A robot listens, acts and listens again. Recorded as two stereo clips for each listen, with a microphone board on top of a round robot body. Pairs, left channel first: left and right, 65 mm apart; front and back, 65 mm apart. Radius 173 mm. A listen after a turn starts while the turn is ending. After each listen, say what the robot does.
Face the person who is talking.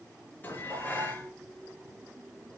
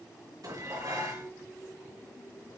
Keep listening.
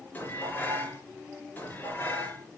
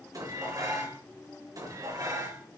Keep listening.
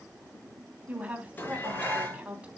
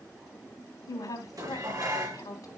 Turn 20° right.
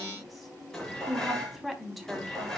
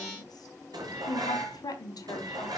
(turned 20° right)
Facing the woman speaking.